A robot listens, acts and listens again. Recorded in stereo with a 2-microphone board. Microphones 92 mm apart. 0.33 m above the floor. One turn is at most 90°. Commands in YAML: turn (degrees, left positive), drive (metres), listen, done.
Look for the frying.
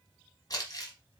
listen: true
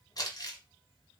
listen: true
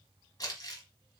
done: "I can't make out frying, only crumpling."